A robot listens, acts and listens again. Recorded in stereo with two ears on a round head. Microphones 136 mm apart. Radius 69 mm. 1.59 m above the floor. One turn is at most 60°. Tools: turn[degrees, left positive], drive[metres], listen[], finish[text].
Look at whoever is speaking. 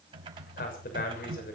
Thought: The man speaking: about 70° left or 110° left.
Action: turn[60]
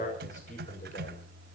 Thought: So it is at 50° left.
Action: turn[50]
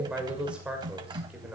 Action: finish[Facing the man speaking.]